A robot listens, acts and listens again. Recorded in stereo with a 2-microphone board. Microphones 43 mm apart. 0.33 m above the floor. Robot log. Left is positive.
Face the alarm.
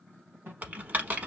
note: The alarm: about 60° right or 120° right.
cmd yaw -60
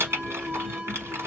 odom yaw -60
note: So it is at 25° right.
cmd yaw -25
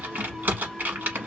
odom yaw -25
cmd idle
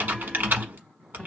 cmd idle
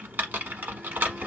end: I heard an alarm from this way, but can't make it out now.